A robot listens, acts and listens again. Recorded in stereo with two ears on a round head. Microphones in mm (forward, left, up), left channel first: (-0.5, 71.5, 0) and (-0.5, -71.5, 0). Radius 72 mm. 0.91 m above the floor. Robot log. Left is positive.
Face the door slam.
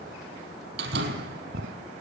cmd yaw -90
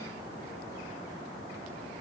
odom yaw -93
end: Facing where the door slam came from. I can't hear it now.